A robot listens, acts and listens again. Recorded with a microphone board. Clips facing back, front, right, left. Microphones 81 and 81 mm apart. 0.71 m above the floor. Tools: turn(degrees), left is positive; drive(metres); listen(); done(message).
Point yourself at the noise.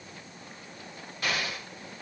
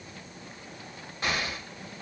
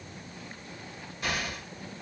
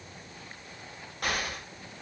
turn(degrees=65)
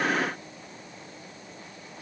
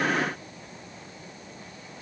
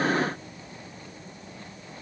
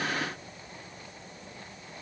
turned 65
done("Facing where the explosion came from. I can't hear it now.")